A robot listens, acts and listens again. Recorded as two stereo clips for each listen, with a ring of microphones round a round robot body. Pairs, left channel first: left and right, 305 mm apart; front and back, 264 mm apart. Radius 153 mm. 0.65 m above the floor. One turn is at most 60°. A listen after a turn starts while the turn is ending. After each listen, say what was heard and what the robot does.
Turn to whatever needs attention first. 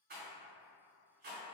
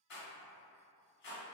Keep listening.
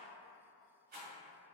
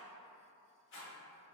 Keep listening.
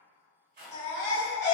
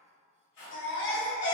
The baby crying: 45° left. Turn 45° left.
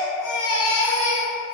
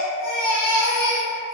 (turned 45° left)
The baby crying is now 15° right. Turn 15° right.
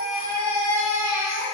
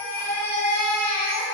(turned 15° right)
The baby crying is now 10° right. Turn 10° right.
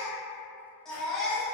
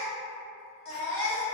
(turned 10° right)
Found it: a baby crying, straight ahead.